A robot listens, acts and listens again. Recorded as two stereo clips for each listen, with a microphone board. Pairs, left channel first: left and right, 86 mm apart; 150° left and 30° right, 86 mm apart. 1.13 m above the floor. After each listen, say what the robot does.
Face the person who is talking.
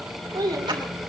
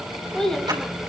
Turn 125° right.
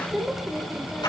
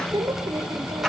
Found it: a child speaking, straight ahead.